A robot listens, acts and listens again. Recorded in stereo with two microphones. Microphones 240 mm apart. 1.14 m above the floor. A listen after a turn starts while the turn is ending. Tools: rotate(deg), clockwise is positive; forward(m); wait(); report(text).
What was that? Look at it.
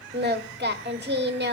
rotate(40)
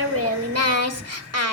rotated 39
rotate(100)
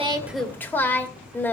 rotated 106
rotate(-10)
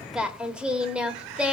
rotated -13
report("Found it: singing, straight ahead.")